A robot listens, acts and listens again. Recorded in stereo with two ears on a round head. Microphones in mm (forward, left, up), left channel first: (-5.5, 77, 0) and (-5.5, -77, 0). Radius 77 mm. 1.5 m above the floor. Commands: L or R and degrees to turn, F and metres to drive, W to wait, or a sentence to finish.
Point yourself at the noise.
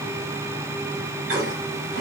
R65
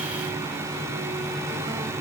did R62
W
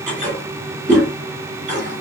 R50
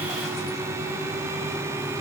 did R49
W
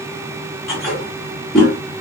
Facing the toilet flushing.